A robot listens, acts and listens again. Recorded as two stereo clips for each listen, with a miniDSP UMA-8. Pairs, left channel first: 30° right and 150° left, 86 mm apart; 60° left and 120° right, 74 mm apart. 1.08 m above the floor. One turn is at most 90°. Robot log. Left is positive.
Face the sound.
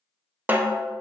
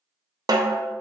note: The snare drum: 145° right.
cmd yaw -90
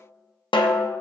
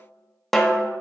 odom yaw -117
note: The snare drum is now 25° right.
cmd yaw -25
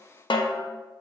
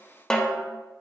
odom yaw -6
note: The snare drum is now 20° right.
cmd yaw -20
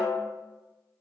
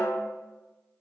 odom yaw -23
end: Found it: a snare drum, straight ahead.